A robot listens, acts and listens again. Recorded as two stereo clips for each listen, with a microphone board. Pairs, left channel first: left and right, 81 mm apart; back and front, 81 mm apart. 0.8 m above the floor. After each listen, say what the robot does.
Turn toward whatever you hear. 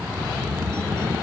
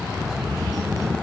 Keep listening.
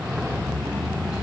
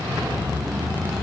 Keep listening.
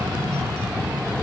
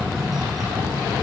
I can't make out anything to turn to.